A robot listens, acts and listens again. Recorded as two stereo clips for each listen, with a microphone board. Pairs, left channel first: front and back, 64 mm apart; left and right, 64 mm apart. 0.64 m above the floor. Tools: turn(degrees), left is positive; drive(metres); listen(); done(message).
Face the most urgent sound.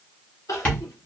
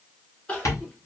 turn(degrees=20)
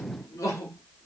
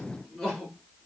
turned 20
done("Facing the crying.")